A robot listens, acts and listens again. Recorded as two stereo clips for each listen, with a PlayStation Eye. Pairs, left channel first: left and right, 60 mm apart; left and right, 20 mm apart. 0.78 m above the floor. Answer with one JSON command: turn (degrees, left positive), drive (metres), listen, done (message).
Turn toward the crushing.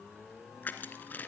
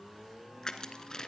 {"turn": 30}
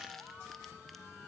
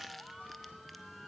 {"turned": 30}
{"listen": true}
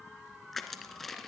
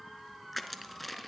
{"done": "Found it: crushing, straight ahead."}